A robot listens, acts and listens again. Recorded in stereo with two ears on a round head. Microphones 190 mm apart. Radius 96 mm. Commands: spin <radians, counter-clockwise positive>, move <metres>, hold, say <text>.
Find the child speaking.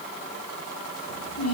spin 1.57
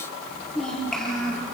say Facing the child speaking.